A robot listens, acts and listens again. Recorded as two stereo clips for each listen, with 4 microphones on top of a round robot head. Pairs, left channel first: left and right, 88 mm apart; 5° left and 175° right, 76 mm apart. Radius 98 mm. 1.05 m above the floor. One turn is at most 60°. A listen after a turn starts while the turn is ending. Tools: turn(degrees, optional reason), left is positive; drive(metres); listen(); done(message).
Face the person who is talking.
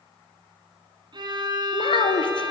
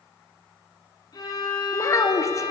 turn(degrees=60, reason="The child speaking: 60° left.")
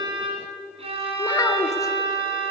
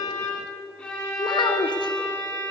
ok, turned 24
turn(degrees=35, reason="Nothing new. It was at 35° left.")
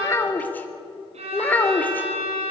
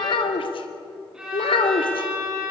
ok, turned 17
turn(degrees=20, reason="The child speaking is now 20° left.")
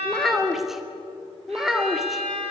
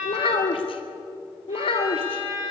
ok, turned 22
done("Found it: a child speaking, straight ahead.")